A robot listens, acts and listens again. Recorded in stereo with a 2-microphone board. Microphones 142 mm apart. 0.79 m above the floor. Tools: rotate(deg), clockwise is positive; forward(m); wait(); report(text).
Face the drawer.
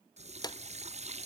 rotate(-30)
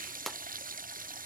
report("Found it: a drawer, straight ahead.")